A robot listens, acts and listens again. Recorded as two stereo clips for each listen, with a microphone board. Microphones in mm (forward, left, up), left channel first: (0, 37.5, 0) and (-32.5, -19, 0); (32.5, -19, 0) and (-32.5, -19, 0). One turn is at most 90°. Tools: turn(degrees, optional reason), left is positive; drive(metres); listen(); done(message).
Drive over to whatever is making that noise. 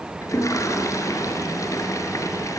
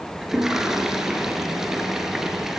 turn(degrees=90, reason="The toilet flushing: 95° left.")
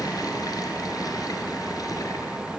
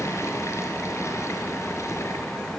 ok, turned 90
turn(degrees=40, reason="The toilet flushing is now 40° left.")
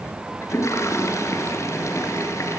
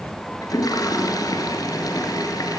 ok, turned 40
turn(degrees=20, reason="The toilet flushing is now 20° left.")
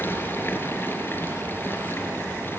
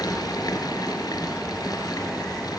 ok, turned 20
drive(metres=1.0)
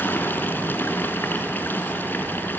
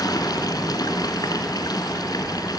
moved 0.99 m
drive(metres=1.0)
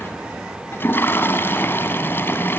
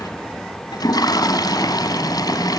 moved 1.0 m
drive(metres=1.0)
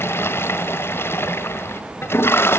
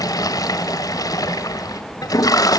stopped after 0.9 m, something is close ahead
turn(degrees=10, reason="The toilet flushing is now 10° left.")
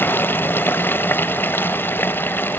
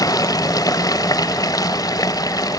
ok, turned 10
done("Arrived at the toilet flushing, straight ahead.")